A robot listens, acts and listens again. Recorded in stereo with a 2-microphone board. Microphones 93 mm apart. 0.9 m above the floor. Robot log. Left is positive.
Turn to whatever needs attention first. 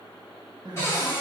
note: The crying: about 50° right or 130° right.
cmd yaw -50
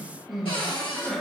end: Found it: crying, straight ahead, under 1 m away.